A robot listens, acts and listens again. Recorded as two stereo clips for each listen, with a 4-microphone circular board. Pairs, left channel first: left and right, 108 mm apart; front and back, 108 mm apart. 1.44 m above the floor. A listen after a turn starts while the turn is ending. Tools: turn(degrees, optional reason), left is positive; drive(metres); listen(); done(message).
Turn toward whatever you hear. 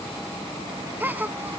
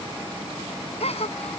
turn(degrees=-15, reason="The gasp: 15° right.")
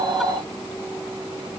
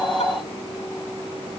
done("I heard a gasp from this way, but can't make it out now.")